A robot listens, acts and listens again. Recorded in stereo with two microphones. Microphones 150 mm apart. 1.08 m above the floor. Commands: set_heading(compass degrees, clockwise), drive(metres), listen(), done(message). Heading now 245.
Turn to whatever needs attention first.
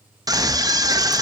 set_heading(270)
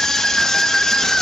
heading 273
done("Found it: a scream, straight ahead, 1 to 2 m away.")